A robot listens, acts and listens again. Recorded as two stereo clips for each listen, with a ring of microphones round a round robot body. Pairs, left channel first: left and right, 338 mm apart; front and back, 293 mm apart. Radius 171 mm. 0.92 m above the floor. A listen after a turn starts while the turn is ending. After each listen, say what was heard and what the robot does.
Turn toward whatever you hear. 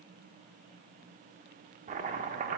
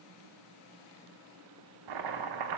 The chopping: 160° right. Turn 160° right.
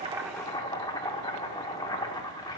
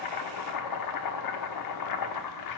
The chopping is now 10° left. Turn 10° left.
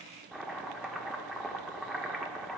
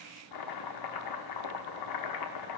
Found it: chopping, straight ahead.